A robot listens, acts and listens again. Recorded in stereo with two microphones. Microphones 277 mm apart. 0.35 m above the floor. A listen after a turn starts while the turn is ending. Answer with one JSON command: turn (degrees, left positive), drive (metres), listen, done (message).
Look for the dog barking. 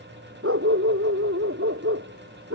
{"turn": -50}
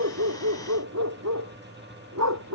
{"turn": -75}
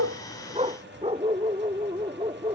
{"turn": -20}
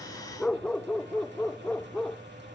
{"done": "Found it: a dog barking, straight ahead."}